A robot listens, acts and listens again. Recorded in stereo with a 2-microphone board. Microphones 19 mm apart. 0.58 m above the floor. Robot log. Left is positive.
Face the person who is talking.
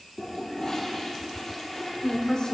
note: The woman speaking: about 45° left or 135° left.
cmd yaw +45
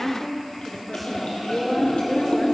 note: So it is at 10° left.
cmd yaw +10
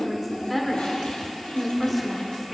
end: Found it: a woman speaking, straight ahead.